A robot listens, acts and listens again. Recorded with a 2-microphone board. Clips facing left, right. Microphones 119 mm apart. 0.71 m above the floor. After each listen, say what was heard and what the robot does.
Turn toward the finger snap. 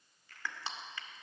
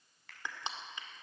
Turn 90° right.
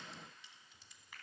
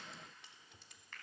So it is at 10° left. Turn 10° left.
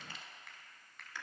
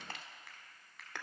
Found it: a finger snap, straight ahead, over 4 m away.